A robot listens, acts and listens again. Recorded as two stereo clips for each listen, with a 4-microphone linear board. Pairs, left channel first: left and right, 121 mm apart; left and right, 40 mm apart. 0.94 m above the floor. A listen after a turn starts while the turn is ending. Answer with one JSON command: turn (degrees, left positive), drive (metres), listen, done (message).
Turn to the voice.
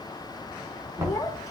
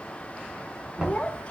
{"turn": 30}
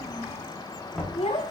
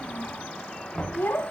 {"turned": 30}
{"turn": 120}
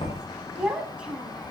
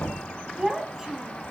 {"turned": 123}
{"turn": -10}
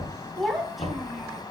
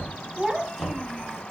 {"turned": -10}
{"done": "Facing the child speaking, over 4 m away."}